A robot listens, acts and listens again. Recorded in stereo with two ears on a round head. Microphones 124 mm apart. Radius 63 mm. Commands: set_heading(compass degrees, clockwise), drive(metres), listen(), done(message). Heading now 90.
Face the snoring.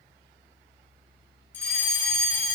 listen()
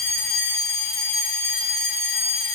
listen()
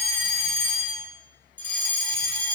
done("I can't make out snoring to turn to.")